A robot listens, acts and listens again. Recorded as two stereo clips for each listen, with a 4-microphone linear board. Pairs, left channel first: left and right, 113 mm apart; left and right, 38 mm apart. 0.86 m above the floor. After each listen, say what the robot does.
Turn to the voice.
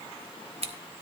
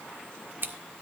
Keep listening.
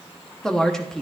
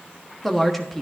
Turn 30° left.
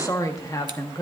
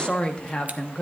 Turn 150° left.
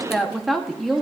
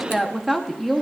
Facing the woman speaking, 1 to 2 m away.